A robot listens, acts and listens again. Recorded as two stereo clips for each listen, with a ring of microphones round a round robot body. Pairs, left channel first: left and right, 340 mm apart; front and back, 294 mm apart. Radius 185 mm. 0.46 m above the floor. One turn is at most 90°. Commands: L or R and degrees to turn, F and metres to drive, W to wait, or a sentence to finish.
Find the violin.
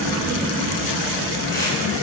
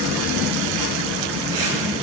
W
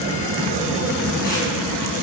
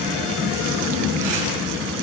W
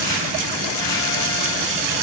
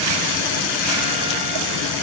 I can't make out a violin to turn to.